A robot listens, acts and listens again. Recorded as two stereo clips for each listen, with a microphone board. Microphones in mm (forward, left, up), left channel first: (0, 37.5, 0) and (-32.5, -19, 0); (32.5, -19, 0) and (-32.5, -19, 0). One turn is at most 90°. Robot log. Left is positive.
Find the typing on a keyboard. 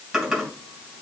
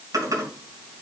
note: The typing on a keyboard: 155° left.
cmd yaw +90
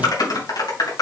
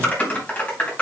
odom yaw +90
note: The typing on a keyboard is now 65° left.
cmd yaw +65
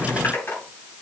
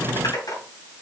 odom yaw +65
end: Facing the typing on a keyboard.